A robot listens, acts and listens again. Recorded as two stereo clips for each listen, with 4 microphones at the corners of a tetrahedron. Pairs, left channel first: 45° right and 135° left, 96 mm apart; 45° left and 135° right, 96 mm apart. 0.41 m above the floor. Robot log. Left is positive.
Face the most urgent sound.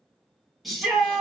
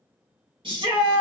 note: The shout: 135° right.
cmd yaw -135
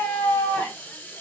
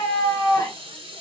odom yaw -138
end: Facing the shout.